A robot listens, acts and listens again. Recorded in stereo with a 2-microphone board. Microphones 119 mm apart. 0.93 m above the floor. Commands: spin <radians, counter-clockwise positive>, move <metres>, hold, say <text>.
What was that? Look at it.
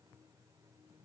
hold
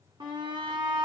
spin -0.70
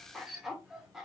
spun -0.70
say Facing the shout, 1 to 2 m away.